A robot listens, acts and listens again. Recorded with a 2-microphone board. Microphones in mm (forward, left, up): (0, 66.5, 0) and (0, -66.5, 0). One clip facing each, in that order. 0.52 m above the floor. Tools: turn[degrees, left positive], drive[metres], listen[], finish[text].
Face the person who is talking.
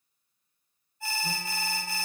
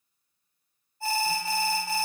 Action: listen[]
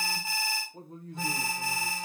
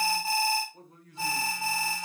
Thought: The man speaking: about 30° left or 150° left.
Action: turn[30]
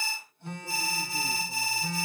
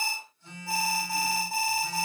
Action: listen[]
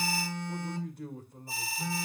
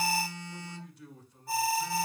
Thought: So it is at 115° left.
Action: turn[115]
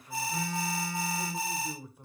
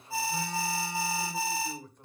Thought: The man speaking is now 10° left.
Action: turn[10]
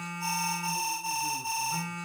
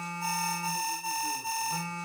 Action: listen[]
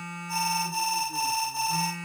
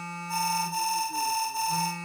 Action: listen[]
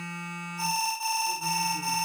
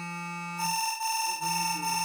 Action: finish[I heard a man speaking from this way, but can't make it out now.]